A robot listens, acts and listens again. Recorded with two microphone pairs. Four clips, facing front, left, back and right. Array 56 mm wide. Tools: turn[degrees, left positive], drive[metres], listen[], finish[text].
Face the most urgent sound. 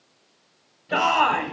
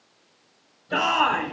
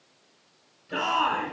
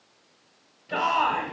Action: finish[Found it: a shout, straight ahead.]